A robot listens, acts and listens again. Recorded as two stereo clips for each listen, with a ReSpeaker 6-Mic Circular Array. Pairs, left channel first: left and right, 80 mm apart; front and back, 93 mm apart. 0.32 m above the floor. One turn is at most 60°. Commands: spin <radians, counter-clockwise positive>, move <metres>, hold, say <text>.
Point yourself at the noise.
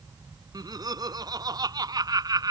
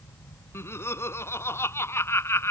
spin -1.05
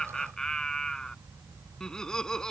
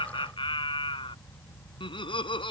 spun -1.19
spin 0.17
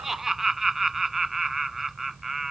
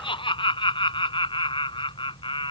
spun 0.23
say Facing the laughter.